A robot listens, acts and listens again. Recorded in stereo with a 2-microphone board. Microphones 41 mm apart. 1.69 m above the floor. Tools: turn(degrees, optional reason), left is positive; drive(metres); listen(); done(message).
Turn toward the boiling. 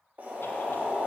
turn(degrees=-40, reason="The boiling: about 40° right or 140° right.")
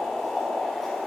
done("Found it: boiling, straight ahead, 2 to 4 m away.")